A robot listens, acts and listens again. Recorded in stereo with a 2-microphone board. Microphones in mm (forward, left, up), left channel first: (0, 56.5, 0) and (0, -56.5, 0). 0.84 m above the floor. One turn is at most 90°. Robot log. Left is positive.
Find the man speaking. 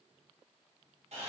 cmd idle
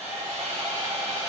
cmd idle
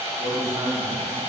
note: The man speaking: about 65° right or 115° right.
cmd yaw -65
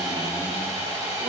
cmd idle
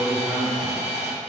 end: Facing the man speaking, 2 to 4 m away.